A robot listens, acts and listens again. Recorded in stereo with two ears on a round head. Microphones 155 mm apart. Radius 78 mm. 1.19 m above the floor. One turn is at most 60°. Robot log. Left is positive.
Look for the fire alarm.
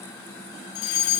note: The fire alarm: about 75° left or 105° left.
cmd yaw +60
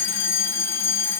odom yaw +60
note: So it is at 15° left.
cmd yaw +15
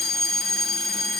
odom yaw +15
end: Found it: a fire alarm, straight ahead, over 4 m away.